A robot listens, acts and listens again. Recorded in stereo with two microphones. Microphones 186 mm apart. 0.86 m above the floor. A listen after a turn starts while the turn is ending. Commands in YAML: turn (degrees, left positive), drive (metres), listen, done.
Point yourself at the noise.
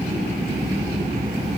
listen: true
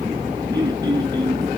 turn: -20
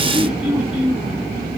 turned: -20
done: "Facing the throat clearing, over 4 m away."